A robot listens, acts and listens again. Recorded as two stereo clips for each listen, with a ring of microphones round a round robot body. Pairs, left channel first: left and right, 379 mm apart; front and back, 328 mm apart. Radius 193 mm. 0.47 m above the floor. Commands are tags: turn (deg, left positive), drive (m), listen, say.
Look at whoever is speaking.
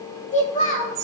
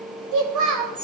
<turn deg="160"/>
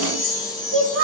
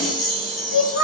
<turn deg="-35"/>
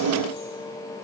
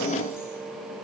<listen/>
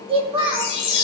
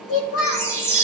<turn deg="-15"/>
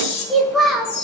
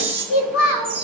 <say>Found it: a child speaking, straight ahead, 1 to 2 m away.</say>